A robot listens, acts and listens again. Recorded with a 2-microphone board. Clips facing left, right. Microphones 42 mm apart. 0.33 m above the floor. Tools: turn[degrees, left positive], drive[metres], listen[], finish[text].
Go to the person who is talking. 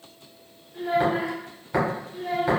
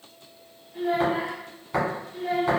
Thought: The child speaking: about 45° right or 135° right.
Action: turn[-45]
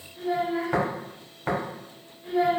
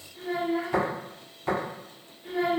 Action: drive[1.0]
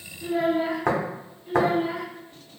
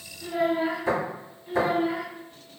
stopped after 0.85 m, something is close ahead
Action: finish[Arrived at the child speaking, straight ahead.]